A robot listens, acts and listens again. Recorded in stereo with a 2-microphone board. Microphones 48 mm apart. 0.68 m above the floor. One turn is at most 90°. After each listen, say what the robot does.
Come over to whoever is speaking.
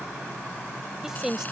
Turn 30° right.
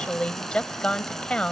Turn 20° left.
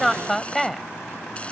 Drive 1.0 m forward.
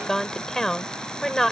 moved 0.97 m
Drive 1.0 m forward.
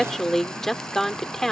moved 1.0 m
Drive 1.0 m forward.
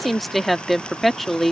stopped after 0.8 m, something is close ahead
I am next to the woman speaking.